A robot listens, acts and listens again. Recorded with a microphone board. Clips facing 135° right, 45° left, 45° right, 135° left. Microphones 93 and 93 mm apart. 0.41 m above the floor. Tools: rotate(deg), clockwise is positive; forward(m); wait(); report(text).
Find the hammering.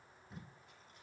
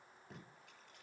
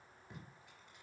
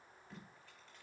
wait()
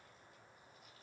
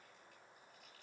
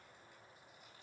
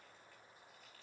wait()
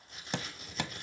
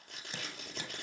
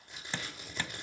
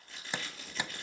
rotate(150)
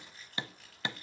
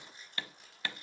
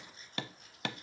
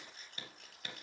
rotate(65)
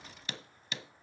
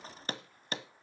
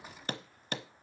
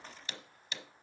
report("Found it: hammering, straight ahead.")